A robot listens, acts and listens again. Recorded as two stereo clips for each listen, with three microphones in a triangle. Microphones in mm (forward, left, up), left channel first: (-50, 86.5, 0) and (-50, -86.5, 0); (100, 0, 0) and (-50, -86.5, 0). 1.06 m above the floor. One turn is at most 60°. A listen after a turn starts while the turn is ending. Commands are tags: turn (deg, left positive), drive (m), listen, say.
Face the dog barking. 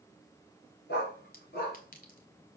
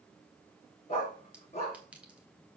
<turn deg="60"/>
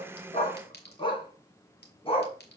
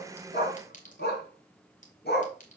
<turn deg="35"/>
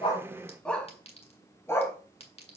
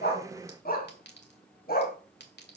<turn deg="20"/>
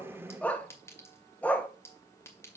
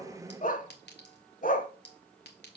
<turn deg="10"/>
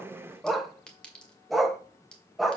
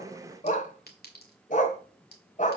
<say>Found it: a dog barking, straight ahead, 1 to 2 m away.</say>